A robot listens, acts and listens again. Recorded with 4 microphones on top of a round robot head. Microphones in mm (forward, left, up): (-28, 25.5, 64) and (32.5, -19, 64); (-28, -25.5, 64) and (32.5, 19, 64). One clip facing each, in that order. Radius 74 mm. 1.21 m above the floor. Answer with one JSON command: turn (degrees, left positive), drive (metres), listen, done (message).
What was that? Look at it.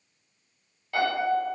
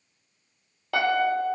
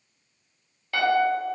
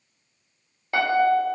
{"turn": -30}
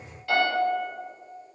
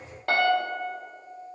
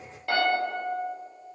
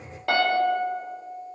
{"done": "Facing the piano."}